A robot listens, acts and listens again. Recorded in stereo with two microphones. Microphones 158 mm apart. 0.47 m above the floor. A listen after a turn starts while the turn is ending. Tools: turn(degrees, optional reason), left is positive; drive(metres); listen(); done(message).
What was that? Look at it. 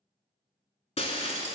turn(degrees=40, reason="The breaking glass: about 40° left or 140° left.")
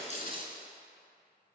turn(degrees=100, reason="So it is at 100° left.")
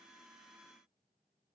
done("I heard breaking glass from this way, but can't make it out now.")